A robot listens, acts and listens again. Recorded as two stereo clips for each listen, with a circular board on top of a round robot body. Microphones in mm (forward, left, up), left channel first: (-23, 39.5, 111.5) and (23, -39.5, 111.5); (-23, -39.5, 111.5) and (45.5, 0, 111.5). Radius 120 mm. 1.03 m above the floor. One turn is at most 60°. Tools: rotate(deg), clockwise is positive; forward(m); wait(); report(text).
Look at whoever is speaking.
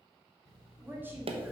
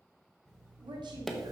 rotate(-10)
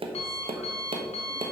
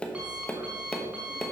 wait()
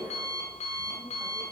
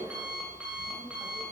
wait()
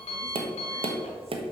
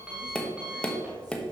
report("Facing where the woman speaking came from. I can't hear it now.")